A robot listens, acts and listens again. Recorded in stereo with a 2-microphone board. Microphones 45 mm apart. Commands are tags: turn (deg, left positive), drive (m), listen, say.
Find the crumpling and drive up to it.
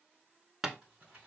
<turn deg="-25"/>
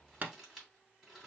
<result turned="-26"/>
<drive m="1.0"/>
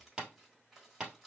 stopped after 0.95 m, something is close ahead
<say>Arrived at the crumpling, straight ahead.</say>